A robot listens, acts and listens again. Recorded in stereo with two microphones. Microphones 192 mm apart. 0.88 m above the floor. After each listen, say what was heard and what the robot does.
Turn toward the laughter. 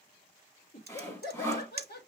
The laughter: about 60° left or 120° left. Turn 60° left.
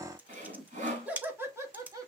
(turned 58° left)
So it is at 20° right. Turn 20° right.
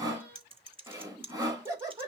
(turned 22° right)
The laughter is now 20° right. Turn 20° right.
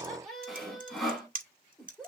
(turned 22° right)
Found it: laughter, straight ahead, 2 to 4 m away.